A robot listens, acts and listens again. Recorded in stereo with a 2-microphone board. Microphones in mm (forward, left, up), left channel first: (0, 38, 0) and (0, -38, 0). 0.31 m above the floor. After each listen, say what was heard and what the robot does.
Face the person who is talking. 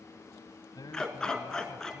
The man speaking: about 55° left or 125° left. Turn 55° left.
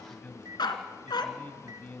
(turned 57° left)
So it is at 20° left. Turn 20° left.
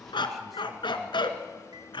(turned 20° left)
Keep listening.
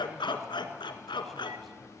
Keep listening.
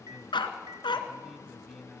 Facing the man speaking.